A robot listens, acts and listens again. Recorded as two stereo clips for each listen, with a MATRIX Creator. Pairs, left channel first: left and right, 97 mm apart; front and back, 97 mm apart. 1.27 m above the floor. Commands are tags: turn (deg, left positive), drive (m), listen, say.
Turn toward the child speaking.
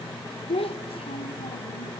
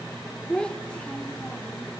<turn deg="80"/>
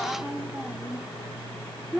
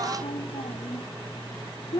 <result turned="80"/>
<turn deg="-10"/>
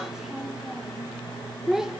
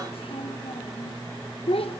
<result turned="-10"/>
<say>Found it: a child speaking, straight ahead, under 1 m away.</say>